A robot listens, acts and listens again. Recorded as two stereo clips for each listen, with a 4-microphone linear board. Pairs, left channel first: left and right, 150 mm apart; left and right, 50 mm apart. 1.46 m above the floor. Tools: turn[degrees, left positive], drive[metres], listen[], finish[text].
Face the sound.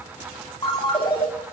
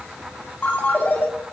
Thought: The ringtone: about 30° left or 150° left.
Action: turn[30]
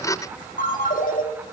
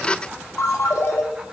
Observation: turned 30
Thought: So it is at 120° left.
Action: turn[120]
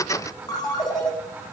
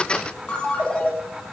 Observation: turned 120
Thought: The ringtone is now 25° left.
Action: turn[25]
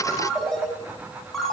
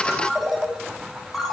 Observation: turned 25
Action: finish[Found it: a ringtone, straight ahead, 2 to 4 m away.]